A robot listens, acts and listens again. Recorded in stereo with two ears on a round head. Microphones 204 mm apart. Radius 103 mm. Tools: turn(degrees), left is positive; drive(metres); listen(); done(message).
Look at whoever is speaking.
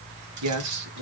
turn(degrees=-90)
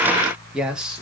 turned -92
done("Found it: a man speaking, straight ahead.")